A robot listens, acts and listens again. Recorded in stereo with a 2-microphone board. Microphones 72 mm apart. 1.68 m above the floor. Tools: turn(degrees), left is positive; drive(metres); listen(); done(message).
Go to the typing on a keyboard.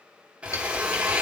turn(degrees=50)
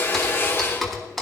drive(metres=1.0)
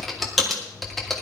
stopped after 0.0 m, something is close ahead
done("Something is in my way. I am facing the typing on a keyboard but have not reached it.")